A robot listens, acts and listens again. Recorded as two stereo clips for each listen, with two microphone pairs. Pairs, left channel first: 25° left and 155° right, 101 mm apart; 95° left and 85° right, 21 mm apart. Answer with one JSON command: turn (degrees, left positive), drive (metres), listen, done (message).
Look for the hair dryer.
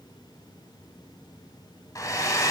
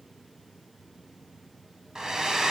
{"turn": -30}
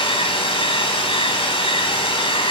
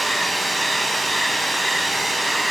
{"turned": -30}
{"done": "Facing the hair dryer, 1 to 2 m away."}